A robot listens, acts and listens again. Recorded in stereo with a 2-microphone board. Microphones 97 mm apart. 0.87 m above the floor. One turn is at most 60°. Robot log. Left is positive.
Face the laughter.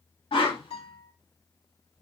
cmd idle
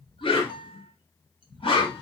cmd idle
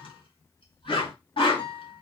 end: I can't make out laughter, only a guitar and a whoosh.